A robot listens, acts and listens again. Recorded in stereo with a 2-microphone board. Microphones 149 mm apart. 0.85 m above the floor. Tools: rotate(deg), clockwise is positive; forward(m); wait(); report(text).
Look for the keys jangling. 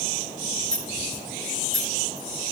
rotate(-55)
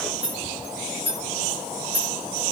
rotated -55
rotate(15)
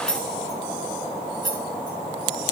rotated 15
report("Facing the keys jangling.")